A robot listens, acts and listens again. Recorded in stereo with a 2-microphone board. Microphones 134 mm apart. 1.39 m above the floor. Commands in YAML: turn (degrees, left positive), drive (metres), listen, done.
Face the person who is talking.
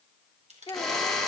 turn: 35
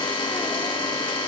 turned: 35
listen: true
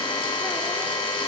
listen: true
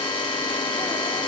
done: "I heard a child speaking, but can't make it out now. It was about straight ahead or 110° left."